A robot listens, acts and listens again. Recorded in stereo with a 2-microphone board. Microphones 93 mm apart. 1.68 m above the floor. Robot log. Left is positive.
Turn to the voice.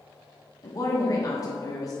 note: The woman speaking: about 40° left or 140° left.
cmd yaw +40
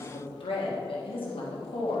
note: So it is at 95° left.
cmd yaw +95
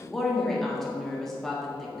end: Facing the woman speaking, 1 to 2 m away.